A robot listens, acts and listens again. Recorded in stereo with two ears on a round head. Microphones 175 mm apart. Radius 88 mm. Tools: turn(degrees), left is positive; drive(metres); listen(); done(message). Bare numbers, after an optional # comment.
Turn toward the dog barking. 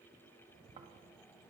listen()
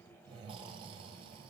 listen()
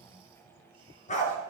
# The dog barking: about 40° left or 140° left.
turn(40)
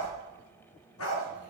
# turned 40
# So it is at 95° left.
turn(95)
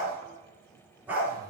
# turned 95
# The dog barking is now 10° right.
turn(-10)
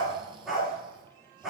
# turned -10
done("Facing the dog barking, 2 to 4 m away.")